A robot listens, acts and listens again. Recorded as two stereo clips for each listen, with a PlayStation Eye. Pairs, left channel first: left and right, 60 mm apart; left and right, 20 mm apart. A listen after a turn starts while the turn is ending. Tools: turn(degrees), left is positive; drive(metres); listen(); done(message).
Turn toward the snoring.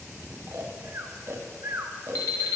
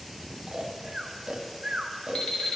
turn(degrees=-45)
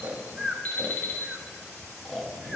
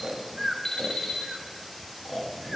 done("Facing the snoring, under 1 m away.")